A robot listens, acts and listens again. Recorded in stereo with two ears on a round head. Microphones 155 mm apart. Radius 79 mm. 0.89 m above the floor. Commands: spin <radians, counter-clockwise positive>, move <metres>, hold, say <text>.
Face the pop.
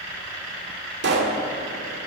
spin -1.31
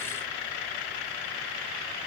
hold
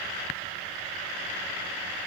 say I heard a pop, but can't make it out now. It was about straight ahead or 30° right.